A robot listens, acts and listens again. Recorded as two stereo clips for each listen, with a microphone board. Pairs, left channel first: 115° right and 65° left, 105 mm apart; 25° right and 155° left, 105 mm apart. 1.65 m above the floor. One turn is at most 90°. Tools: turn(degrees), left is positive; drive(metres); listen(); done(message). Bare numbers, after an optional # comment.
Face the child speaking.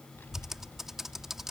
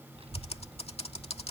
# The child speaking: 175° left.
turn(90)
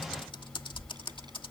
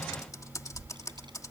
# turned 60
# The child speaking is now 115° left.
turn(90)
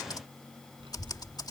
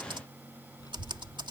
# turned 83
# The child speaking is now 30° left.
turn(30)
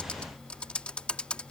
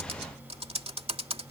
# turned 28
listen()
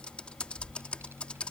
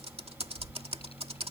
done("Found it: a child speaking, straight ahead.")